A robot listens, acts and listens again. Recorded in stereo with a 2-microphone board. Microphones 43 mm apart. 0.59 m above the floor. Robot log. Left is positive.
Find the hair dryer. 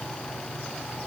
cmd idle
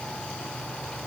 cmd idle
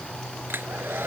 note: The hair dryer: about 55° right or 125° right.
cmd yaw -55
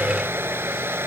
note: So it is at 65° right.
cmd yaw -65
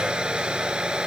note: The hair dryer is now 20° right.
cmd yaw -20
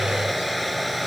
end: Found it: a hair dryer, straight ahead.